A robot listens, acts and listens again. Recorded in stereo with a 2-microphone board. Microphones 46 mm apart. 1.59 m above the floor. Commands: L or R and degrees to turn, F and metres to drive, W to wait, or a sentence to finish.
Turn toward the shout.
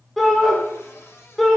L30
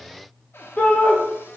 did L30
L150
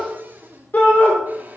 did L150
L40
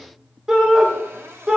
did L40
R15
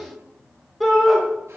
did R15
Facing the shout.